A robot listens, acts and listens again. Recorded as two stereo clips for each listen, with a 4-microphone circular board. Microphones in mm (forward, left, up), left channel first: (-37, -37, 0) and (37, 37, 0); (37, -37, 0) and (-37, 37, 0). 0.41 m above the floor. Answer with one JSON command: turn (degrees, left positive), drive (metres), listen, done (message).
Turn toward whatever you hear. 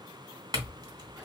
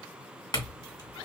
{"done": "Found it: a clink, straight ahead."}